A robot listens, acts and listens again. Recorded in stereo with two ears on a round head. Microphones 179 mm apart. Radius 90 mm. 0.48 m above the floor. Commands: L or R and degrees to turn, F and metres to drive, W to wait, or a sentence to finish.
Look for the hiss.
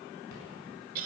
W
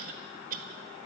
W
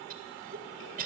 I can't make out a hiss, only a cough.